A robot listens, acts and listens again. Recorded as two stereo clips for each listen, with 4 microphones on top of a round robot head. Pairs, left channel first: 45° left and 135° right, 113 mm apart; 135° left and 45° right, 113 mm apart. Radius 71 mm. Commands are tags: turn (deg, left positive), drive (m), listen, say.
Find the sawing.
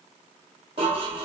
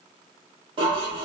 <listen/>
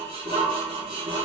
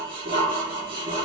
<listen/>
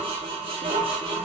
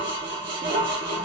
<say>I can't make out sawing, only dishes clattering.</say>